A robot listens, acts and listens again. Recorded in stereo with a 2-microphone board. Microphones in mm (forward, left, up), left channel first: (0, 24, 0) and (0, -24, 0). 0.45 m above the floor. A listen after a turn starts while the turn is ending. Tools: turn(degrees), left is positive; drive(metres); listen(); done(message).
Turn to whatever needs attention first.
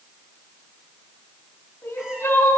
turn(degrees=65)
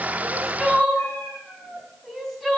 done("Facing the crying, 2 to 4 m away.")